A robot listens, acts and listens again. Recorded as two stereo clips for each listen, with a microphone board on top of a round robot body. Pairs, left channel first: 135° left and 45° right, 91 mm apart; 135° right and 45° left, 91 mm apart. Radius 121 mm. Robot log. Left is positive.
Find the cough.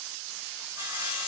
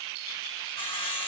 cmd idle
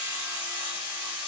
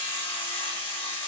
cmd idle
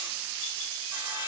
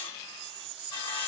end: I can't make out a cough to turn to.